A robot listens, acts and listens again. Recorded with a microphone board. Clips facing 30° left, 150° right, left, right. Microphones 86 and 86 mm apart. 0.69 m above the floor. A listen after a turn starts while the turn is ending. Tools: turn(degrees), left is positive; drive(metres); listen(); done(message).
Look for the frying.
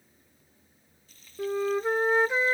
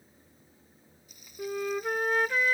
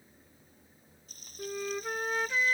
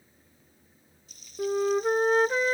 turn(degrees=135)
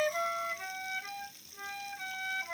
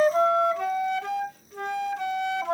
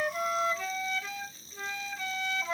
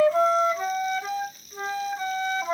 turn(degrees=30)
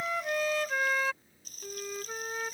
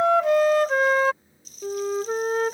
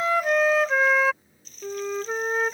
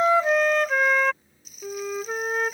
turn(degrees=-10)
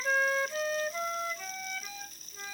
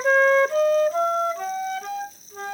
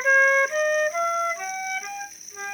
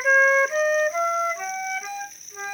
done("Facing the frying.")